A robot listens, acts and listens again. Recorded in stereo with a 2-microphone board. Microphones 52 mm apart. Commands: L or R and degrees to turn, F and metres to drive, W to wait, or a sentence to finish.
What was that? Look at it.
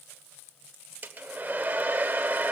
R35
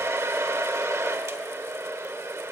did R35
R110
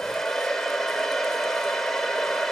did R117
L10
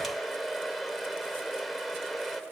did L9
Facing the hair dryer.